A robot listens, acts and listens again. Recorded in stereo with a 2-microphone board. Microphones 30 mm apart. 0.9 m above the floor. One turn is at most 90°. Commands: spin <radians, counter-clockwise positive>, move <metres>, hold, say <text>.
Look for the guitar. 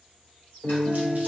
spin 0.35
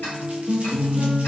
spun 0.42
spin 1.57
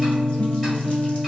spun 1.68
spin 0.61
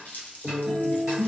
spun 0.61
say Facing the guitar, under 1 m away.